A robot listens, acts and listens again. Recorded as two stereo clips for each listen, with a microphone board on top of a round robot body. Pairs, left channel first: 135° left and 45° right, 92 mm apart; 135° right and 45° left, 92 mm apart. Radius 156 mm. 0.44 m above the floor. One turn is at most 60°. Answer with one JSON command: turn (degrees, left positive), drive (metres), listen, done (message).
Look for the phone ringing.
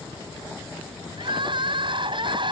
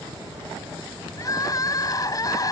{"listen": true}
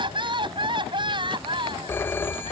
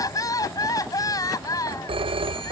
{"turn": 60}
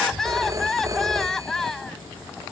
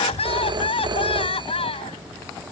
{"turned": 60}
{"turn": 10}
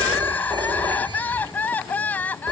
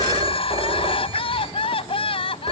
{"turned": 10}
{"done": "Found it: a phone ringing, straight ahead."}